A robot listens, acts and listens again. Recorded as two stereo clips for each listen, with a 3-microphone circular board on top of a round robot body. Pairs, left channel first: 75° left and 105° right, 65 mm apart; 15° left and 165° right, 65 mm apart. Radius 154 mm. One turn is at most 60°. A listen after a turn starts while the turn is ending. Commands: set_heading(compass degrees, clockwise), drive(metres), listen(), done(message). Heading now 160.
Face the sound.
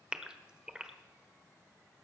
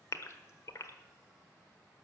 set_heading(190)
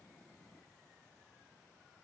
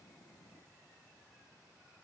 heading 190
done("I heard a gasp from this way, but can't make it out now.")